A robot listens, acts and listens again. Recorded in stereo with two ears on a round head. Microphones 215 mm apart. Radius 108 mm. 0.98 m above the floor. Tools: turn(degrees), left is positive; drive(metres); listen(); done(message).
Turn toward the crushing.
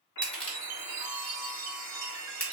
turn(degrees=30)
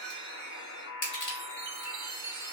turn(degrees=140)
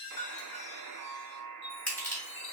done("Facing the crushing, 1 to 2 m away.")